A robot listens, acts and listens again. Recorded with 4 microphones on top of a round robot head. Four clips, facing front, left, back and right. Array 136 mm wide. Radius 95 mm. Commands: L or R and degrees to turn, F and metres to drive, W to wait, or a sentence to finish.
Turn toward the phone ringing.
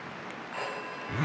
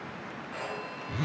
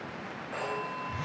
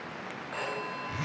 R155
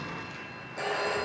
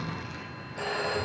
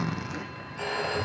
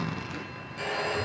L35
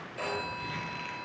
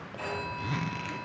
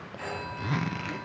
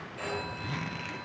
Facing the phone ringing, over 4 m away.